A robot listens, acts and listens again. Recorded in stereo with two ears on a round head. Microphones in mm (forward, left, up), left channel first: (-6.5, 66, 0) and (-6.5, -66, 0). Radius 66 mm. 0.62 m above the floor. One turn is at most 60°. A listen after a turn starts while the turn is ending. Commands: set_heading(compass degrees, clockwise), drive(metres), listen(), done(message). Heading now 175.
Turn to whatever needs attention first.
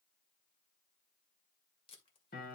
listen()
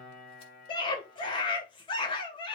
set_heading(140)
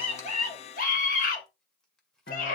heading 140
set_heading(80)
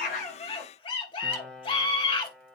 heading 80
set_heading(40)
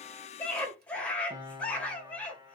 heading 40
set_heading(30)
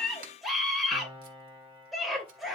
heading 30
done("Facing the scream, 2 to 4 m away.")